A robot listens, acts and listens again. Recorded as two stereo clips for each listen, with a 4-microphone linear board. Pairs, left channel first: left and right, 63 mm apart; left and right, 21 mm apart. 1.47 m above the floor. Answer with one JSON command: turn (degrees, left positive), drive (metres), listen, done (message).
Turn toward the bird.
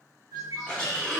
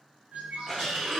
{"turn": -90}
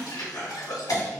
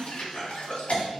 {"listen": true}
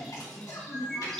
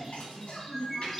{"turn": 10}
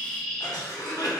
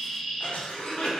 {"done": "Found it: a bird, straight ahead, under 1 m away."}